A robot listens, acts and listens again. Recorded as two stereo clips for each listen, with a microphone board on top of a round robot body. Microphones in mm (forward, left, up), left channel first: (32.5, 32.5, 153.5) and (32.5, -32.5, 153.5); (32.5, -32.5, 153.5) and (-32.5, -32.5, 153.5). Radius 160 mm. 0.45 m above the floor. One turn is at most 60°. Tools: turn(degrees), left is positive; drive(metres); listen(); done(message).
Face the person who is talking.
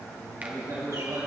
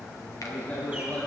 turn(degrees=-60)
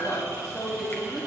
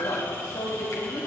turn(degrees=-10)
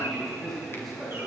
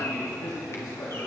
done("Facing the man speaking, 2 to 4 m away.")